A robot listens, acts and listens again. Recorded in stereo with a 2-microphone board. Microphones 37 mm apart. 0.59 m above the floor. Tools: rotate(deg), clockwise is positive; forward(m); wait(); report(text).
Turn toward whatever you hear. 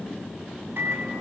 rotate(90)
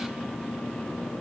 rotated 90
wait()
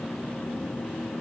wait()
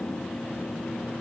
report("I heard a microwave from this way, but can't make it out now.")